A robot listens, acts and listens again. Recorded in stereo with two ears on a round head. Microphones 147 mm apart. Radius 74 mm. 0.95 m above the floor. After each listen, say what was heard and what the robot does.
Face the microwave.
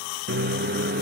The microwave: about 60° right or 120° right. Turn 60° right.
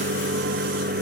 So it is at 60° right. Turn 60° right.
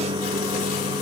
The microwave is now 25° right. Turn 25° right.
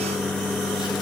Facing the microwave, under 1 m away.